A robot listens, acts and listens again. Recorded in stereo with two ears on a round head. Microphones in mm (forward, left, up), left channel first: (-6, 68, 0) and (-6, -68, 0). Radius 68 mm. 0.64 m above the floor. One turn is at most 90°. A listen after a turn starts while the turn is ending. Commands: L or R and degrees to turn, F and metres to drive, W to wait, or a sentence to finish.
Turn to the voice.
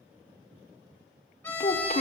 L50
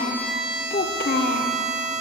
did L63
L65
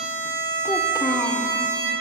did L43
L20
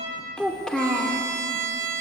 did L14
Facing the child speaking.